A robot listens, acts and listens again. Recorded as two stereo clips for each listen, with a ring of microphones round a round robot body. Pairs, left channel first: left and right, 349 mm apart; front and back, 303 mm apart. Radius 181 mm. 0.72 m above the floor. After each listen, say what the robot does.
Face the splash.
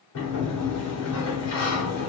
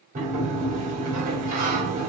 Keep listening.
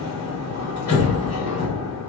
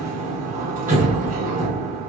Keep listening.
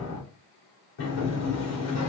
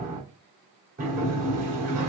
I can't make out a splash, only a sliding door.